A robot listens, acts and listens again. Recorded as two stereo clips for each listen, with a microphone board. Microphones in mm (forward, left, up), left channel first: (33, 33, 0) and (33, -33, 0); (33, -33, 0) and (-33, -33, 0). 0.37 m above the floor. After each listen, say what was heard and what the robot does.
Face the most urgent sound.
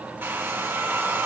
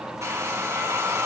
Keep listening.
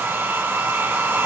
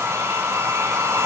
Keep listening.
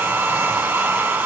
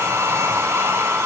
I can't make out anything urgent, only a hair dryer.